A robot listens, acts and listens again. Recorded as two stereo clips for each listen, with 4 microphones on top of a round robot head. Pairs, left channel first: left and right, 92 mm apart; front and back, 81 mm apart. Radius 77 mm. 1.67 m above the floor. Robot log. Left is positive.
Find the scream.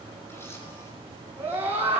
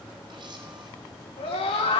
note: The scream: 15° right.
cmd yaw -15
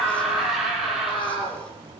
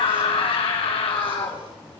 end: Found it: a scream, straight ahead.